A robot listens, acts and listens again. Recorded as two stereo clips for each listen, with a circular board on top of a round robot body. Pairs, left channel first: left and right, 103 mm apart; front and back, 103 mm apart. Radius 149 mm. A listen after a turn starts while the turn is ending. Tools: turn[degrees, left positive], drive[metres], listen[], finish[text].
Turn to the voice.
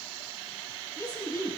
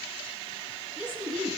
Thought: The woman speaking: 35° left.
Action: turn[35]
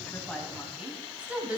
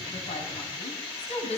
Thought: The woman speaking is now 10° right.
Action: turn[-10]
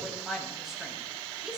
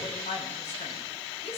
Action: finish[Found it: a woman speaking, straight ahead, 2 to 4 m away.]